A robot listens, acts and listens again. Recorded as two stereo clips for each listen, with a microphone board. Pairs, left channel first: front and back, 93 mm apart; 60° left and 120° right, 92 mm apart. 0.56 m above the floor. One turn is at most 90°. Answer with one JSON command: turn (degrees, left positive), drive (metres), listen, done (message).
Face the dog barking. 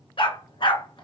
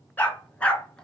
{"turn": -20}
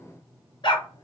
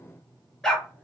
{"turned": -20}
{"turn": -25}
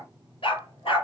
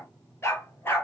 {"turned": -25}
{"done": "Facing the dog barking."}